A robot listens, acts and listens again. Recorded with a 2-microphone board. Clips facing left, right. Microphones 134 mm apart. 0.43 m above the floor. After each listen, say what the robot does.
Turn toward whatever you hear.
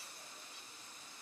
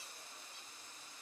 Keep listening.
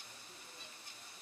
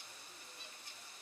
Keep listening.
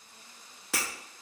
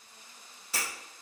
Turn 90° left.
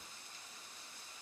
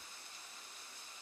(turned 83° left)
Facing where the breaking glass came from. I can't hear it now.